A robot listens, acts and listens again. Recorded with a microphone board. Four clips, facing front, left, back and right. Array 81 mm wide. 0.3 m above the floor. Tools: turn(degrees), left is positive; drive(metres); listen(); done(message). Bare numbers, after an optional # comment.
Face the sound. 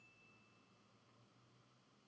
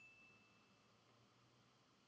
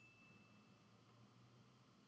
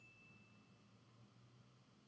listen()
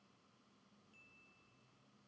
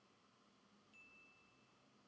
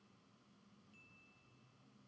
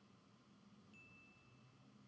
listen()
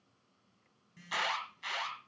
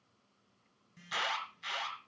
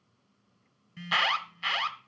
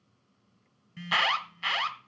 # The alarm: 125° right.
turn(-125)
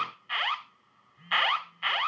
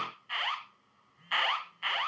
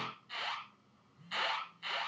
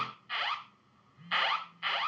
# The alarm is now 10° left.
turn(10)
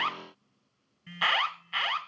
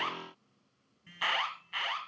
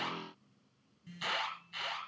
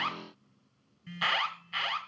done("Found it: an alarm, straight ahead.")